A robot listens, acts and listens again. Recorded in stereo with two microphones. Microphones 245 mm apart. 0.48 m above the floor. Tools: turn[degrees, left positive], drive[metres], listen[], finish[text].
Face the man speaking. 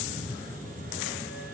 Action: listen[]
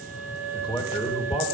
Thought: The man speaking: about 25° left or 155° left.
Action: turn[25]
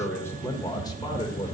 Thought: The man speaking: about 20° left or 160° left.
Action: turn[20]
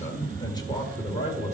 Thought: The man speaking: about 25° left or 155° left.
Action: turn[25]
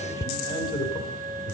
Thought: The man speaking: about 20° left or 160° left.
Action: turn[20]
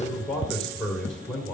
Action: finish[Facing the man speaking, 2 to 4 m away.]